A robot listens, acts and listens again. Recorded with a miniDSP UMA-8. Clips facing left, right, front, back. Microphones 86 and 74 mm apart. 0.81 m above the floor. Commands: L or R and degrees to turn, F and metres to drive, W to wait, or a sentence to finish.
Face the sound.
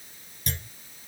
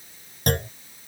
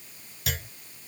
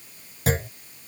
R125
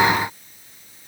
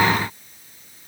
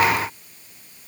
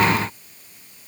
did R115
R10
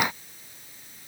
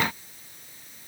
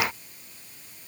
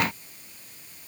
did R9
I heard a clunk from this way, but can't make it out now.